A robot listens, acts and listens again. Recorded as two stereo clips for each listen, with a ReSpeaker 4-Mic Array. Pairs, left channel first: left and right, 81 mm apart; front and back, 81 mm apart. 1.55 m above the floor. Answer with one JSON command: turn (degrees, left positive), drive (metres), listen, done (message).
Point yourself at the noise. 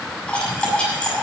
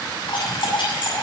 {"turn": 15}
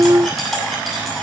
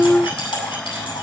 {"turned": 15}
{"done": "Facing the cutlery clinking, over 4 m away."}